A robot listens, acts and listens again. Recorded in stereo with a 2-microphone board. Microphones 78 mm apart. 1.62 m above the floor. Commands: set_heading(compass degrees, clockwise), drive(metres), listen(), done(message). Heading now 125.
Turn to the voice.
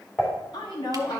set_heading(35)
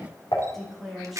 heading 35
done("Found it: a woman speaking, straight ahead.")